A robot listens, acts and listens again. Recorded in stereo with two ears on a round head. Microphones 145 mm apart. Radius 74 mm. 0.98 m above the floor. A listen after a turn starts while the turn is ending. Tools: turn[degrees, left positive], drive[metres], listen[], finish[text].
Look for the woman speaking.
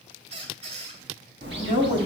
Thought: The woman speaking: about 50° right or 130° right.
Action: turn[-50]
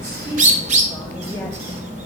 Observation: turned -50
Action: listen[]
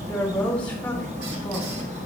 Thought: So it is at 10° left.
Action: turn[10]
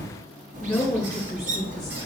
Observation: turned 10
Action: finish[Found it: a woman speaking, straight ahead.]